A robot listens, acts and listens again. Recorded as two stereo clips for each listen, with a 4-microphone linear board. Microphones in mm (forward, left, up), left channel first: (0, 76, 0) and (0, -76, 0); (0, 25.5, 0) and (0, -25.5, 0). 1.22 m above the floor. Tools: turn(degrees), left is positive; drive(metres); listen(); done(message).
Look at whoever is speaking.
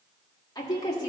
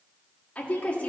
turn(degrees=25)
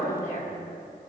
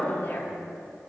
turn(degrees=125)
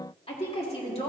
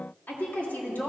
turn(degrees=40)
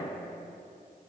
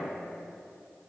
turn(degrees=-10)
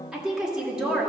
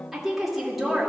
done("Facing the woman speaking, 2 to 4 m away.")